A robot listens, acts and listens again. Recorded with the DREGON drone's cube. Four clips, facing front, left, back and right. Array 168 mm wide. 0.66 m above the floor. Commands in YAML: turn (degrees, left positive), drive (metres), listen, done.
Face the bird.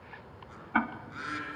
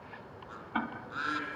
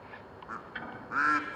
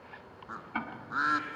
turn: -145
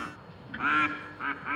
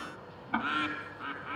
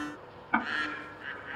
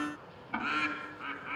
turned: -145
turn: 10
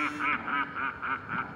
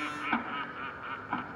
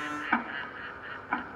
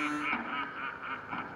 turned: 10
done: "Found it: a bird, straight ahead."